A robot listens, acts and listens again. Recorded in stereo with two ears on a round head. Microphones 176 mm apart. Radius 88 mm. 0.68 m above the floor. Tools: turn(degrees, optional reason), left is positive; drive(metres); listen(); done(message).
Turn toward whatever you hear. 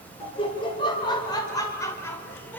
turn(degrees=30)
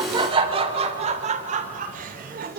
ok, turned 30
turn(degrees=-50, reason="So it is at 50° right.")
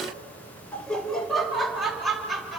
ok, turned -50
done("Facing the laughter.")